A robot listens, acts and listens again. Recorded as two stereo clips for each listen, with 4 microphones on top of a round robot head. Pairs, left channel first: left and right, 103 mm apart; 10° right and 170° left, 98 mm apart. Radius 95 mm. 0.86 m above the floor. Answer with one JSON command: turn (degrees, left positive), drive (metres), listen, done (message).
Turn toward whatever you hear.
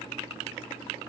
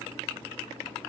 {"listen": true}
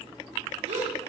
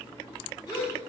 {"turn": -65}
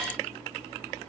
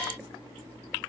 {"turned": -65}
{"done": "I heard a gasp from this way, but can't make it out now."}